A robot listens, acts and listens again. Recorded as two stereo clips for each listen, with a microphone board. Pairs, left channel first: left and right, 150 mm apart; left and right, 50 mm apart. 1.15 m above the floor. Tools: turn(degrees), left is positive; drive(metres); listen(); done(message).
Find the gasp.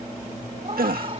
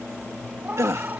turn(degrees=-90)
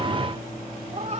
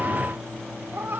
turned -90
done("I heard a gasp from this way, but can't make it out now.")